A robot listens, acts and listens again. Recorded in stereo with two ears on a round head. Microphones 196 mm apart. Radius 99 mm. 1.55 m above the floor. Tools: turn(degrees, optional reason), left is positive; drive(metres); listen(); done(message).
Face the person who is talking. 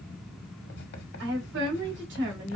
turn(degrees=-55, reason="The woman speaking: about 55° right or 125° right.")
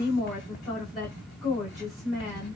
done("Found it: a woman speaking, straight ahead.")